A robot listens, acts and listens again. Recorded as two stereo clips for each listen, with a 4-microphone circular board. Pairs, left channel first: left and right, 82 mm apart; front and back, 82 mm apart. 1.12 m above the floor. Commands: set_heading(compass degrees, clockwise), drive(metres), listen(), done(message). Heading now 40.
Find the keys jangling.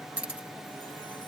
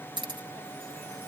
set_heading(205)
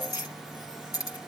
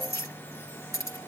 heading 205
set_heading(160)
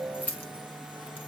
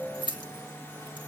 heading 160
set_heading(140)
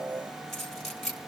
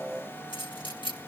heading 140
done("Found it: keys jangling, straight ahead, 1 to 2 m away.")